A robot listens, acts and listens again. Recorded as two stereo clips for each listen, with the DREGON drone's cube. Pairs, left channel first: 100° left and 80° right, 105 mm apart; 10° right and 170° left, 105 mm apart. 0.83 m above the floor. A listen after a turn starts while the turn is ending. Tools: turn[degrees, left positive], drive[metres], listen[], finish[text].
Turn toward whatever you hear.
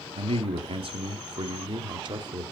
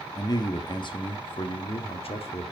Thought: The man speaking: 30° right.
Action: turn[-30]
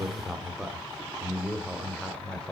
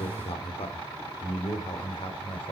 Thought: The man speaking is now 20° left.
Action: turn[20]
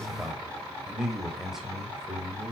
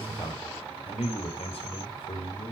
Thought: The man speaking is now 10° left.
Action: turn[10]
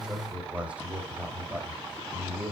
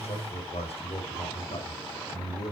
Action: finish[Found it: a man speaking, straight ahead.]